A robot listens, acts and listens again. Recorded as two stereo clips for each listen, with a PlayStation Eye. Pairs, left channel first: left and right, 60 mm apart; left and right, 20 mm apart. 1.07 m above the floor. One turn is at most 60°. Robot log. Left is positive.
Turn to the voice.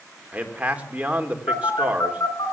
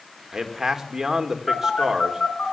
note: The man speaking: about 20° right or 160° right.
cmd yaw -20
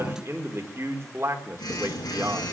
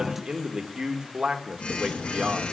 note: So it is at 140° right.
cmd yaw -60
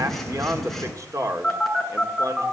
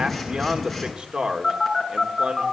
note: The man speaking is now 55° right.
cmd yaw -55
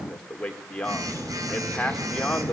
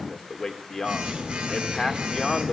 note: The man speaking is now 15° left.
cmd yaw +15
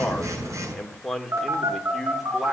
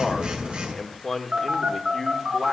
end: Facing the man speaking.